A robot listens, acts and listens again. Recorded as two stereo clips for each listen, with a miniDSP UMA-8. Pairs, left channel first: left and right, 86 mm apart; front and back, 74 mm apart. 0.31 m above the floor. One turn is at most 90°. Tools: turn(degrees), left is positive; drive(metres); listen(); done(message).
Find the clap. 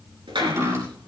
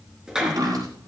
turn(degrees=-90)
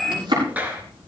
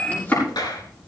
turn(degrees=-20)
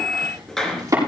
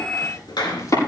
done("Facing the clap.")